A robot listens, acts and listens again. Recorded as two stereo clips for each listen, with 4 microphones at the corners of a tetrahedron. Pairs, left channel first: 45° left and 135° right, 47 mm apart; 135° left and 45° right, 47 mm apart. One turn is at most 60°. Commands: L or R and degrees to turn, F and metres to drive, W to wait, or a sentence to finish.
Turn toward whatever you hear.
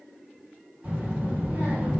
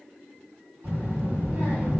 R60
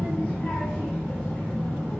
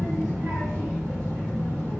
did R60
R25
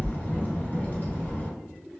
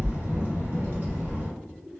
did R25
Found it: a child speaking, straight ahead.